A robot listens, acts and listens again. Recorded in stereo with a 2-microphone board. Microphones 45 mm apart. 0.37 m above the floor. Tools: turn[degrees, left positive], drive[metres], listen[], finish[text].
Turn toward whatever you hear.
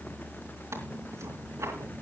Thought: The tearing paper: about 75° right or 105° right.
Action: turn[-75]
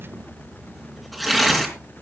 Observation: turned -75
Action: finish[Found it: tearing paper, straight ahead, over 4 m away.]